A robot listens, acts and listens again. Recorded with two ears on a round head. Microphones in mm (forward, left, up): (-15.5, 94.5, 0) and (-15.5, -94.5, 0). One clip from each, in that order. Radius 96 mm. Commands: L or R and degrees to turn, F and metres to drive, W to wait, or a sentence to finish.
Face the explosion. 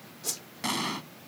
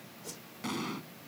L35
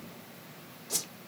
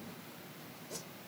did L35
W
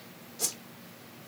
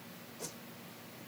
I heard an explosion, but can't make it out now. It was about straight ahead or 110° left.